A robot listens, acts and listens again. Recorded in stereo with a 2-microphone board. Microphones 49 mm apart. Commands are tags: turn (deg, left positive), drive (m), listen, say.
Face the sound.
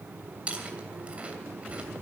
<turn deg="-30"/>
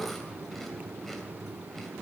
<listen/>
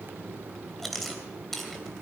<say>Found it: chewing, straight ahead, 2 to 4 m away.</say>